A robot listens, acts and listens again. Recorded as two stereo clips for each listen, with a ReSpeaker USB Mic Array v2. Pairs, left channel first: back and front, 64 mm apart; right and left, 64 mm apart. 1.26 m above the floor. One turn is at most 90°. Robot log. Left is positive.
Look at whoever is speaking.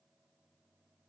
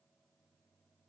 cmd idle
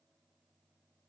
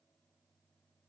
cmd idle
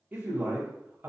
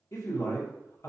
note: The man speaking: 60° right.
cmd yaw -60
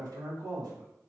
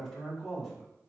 end: Facing the man speaking.